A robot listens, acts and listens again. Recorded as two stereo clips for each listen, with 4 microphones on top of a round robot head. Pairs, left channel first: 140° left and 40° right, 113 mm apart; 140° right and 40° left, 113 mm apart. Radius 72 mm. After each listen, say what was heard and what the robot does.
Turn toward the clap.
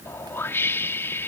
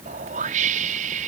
Keep listening.
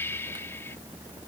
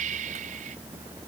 Keep listening.
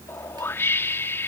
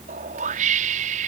I can't make out a clap to turn to.